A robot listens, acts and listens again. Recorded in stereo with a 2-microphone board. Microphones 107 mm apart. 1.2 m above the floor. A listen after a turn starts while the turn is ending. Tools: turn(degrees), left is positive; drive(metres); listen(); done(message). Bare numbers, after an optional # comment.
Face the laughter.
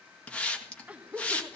turn(-30)
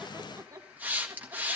# So it is at 150° right.
turn(-150)
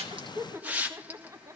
# The laughter is now 30° right.
turn(-30)
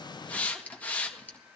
listen()
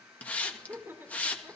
# The laughter is now 20° right.
turn(-20)
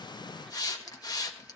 listen()
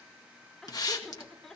done("Facing the laughter.")